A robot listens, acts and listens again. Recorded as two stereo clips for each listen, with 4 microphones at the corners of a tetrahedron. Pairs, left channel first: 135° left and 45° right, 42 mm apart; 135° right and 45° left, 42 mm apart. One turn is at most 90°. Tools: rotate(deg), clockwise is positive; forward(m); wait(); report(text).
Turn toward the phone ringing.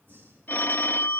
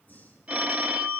rotate(-90)
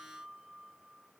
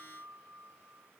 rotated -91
rotate(-15)
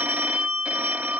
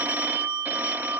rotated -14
report("Facing the phone ringing.")